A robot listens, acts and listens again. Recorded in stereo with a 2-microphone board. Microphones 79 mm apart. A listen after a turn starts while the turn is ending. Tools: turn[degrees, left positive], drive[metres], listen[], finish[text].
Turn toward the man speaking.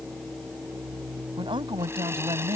Action: turn[-90]
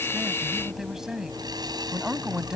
Thought: So it is at 10° right.
Action: turn[-10]
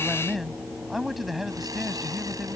Action: finish[Found it: a man speaking, straight ahead.]